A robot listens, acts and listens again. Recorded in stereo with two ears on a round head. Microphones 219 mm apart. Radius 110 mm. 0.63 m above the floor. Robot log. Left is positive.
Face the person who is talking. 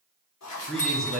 cmd yaw +30
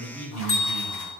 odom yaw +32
note: So it is at 145° left.
cmd yaw +145
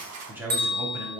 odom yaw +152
note: The man speaking is now 10° right.
cmd yaw -10
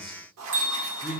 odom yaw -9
end: Facing the man speaking, under 1 m away.